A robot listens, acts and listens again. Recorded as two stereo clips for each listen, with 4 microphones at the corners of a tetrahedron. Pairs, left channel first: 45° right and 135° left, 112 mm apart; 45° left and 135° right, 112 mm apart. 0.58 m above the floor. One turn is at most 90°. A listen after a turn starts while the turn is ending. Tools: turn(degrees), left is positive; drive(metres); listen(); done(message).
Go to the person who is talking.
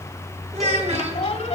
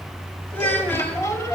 turn(degrees=90)
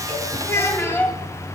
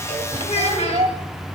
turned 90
turn(degrees=20)
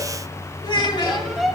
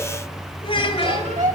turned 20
drive(metres=1.0)
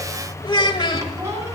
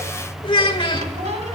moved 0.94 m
drive(metres=1.0)
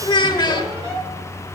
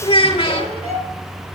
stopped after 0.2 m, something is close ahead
done("Arrived at the child speaking, straight ahead.")